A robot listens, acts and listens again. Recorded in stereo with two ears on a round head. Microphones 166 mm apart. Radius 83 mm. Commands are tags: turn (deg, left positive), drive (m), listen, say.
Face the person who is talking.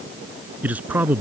<turn deg="-30"/>
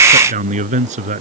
<turn deg="-140"/>
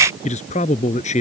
<turn deg="40"/>
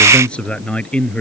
<say>Facing the man speaking.</say>